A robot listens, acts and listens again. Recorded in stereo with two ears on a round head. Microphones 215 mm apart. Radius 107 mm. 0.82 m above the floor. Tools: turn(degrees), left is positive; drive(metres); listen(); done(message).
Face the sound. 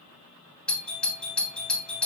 turn(degrees=30)
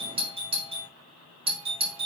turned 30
turn(degrees=-25)
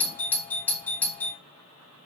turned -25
done("Facing the doorbell.")